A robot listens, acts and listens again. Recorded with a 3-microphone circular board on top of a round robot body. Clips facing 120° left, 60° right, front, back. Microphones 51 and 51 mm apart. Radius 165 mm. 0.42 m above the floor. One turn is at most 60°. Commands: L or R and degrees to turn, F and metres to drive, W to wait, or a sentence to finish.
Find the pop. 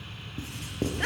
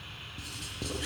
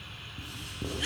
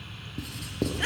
W
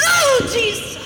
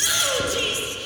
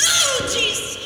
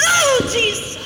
W
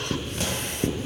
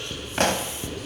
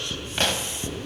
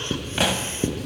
R60
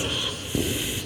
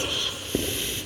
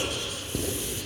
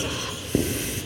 R35
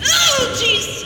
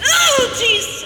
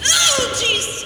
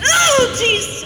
Facing where the pop came from. I can't hear it now.